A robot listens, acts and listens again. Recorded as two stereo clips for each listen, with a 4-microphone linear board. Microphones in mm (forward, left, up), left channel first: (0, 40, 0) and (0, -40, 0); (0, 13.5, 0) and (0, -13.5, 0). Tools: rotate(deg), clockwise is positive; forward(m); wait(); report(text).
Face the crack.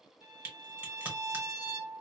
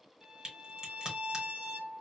rotate(20)
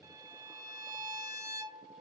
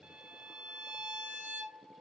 wait()
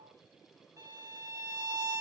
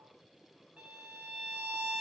report("I heard a crack, but can't make it out now. It was about straight ahead or 140° right.")